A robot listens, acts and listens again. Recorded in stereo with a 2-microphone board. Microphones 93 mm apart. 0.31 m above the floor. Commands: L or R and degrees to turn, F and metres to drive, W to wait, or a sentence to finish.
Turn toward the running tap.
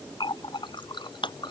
L60
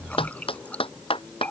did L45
L15
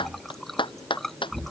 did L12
Found it: a running tap, straight ahead.